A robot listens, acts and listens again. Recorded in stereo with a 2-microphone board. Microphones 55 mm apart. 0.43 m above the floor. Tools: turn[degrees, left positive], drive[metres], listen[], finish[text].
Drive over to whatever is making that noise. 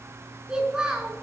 Action: turn[-30]
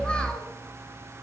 Action: listen[]
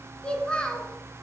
Thought: So it is at 15° left.
Action: turn[15]
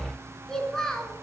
Thought: The child speaking is now 10° left.
Action: turn[10]
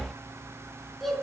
Action: drive[1.0]
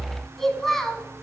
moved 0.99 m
Action: drive[1.0]
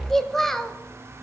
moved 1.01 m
Action: drive[1.0]
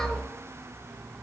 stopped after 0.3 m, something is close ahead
Action: listen[]
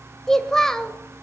Thought: The child speaking is now 10° left.
Action: turn[10]
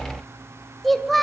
Action: finish[Arrived at the child speaking, straight ahead.]